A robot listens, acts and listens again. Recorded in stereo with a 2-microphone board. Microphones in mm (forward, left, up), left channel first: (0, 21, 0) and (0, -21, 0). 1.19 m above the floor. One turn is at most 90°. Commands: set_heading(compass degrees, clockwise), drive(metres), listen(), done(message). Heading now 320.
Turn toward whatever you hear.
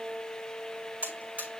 set_heading(5)
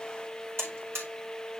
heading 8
set_heading(93)
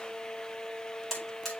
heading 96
done("Found it: a buzzer, straight ahead.")